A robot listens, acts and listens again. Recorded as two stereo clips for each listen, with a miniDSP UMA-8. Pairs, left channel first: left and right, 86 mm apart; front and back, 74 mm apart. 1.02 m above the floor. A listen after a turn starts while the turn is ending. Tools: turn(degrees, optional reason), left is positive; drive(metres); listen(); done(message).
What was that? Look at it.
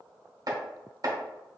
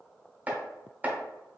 turn(degrees=-115, reason="The chopping: 115° right.")
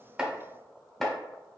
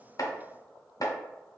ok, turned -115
done("Facing the chopping.")